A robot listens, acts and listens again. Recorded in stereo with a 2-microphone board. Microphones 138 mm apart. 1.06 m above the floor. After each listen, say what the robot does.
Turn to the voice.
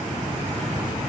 Keep listening.
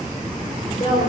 Turn 45° left.
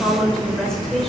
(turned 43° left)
Found it: a woman speaking, straight ahead.